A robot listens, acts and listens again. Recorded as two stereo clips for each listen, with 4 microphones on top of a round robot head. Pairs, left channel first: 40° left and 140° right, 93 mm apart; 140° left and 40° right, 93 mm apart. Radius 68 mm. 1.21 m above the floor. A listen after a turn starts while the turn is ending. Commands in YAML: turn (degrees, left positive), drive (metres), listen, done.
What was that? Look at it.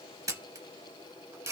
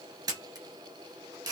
turn: -90
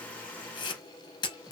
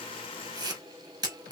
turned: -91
done: "Found it: a camera shutter, straight ahead."